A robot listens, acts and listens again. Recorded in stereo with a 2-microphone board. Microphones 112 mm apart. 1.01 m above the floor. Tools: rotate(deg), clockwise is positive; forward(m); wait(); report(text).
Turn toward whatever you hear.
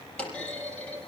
rotate(-30)
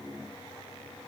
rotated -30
wait()
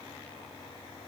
report("I heard a clunk, but can't make it out now. It was about 20° right or 140° left.")